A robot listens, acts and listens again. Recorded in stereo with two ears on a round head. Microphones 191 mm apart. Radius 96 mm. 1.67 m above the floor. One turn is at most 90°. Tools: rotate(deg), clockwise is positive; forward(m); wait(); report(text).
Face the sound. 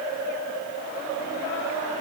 wait()
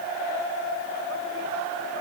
wait()
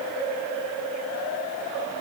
report("I can't make out anything.")